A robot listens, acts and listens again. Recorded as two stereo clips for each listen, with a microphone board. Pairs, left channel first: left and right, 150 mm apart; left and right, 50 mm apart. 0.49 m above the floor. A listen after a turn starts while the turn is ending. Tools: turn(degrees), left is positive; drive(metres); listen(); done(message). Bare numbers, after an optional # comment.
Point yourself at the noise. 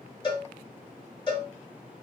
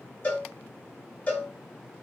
# The cowbell: about 30° left or 150° left.
turn(30)
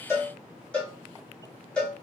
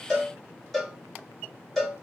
# So it is at 10° left.
turn(10)
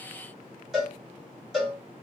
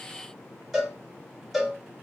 done("Found it: a cowbell, straight ahead, 1 to 2 m away.")